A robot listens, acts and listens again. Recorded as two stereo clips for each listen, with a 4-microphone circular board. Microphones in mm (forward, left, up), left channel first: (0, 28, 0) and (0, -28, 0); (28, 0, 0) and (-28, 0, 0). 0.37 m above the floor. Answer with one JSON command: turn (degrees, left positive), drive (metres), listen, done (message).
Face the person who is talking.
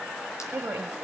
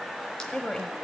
{"turn": -65}
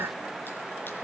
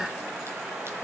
{"listen": true}
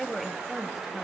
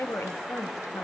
{"done": "Facing the woman speaking, 2 to 4 m away."}